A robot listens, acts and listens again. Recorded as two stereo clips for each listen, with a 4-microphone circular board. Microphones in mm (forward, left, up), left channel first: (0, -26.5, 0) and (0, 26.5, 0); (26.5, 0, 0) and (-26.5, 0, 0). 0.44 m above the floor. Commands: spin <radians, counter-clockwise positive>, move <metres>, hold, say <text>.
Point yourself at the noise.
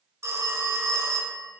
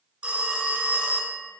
spin 2.01
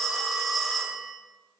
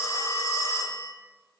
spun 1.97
say Facing the phone ringing.